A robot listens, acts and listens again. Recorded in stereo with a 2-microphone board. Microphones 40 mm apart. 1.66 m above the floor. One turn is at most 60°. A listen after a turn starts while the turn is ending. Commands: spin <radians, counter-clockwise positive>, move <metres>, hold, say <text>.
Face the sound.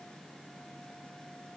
hold
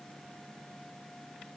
hold
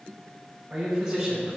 spin -0.35
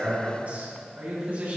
spin -0.70
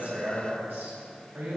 spin -1.05
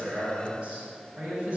spin -0.52
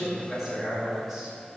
say Found it: a man speaking, straight ahead, over 4 m away.